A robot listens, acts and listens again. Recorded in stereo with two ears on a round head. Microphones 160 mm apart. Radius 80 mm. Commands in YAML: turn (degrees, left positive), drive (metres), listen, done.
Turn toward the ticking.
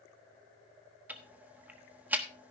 turn: -30
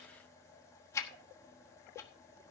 turn: 20
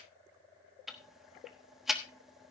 done: "Facing the ticking, 1 to 2 m away."